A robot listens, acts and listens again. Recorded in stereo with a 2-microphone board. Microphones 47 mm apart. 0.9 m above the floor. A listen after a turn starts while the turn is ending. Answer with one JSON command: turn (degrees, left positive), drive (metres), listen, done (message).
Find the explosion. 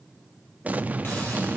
{"turn": -35}
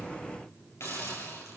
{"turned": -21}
{"listen": true}
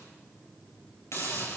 {"done": "I heard an explosion, but can't make it out now. It was about 15° right or 125° right."}